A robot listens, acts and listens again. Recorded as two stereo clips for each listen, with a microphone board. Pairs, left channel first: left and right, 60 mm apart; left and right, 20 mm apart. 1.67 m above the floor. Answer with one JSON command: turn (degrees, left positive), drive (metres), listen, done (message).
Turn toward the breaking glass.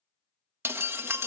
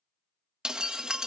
{"turn": -45}
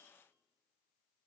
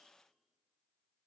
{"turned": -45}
{"listen": true}
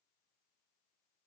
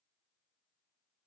{"done": "I heard breaking glass, but can't make it out now. It was about straight ahead or 90° right."}